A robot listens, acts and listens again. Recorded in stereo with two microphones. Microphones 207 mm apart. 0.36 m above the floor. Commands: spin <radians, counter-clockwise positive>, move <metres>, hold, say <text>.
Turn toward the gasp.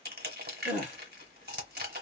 spin -0.79
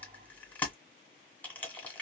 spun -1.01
hold
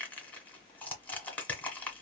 say I heard a gasp, but can't make it out now. It was about 15° left or 80° right.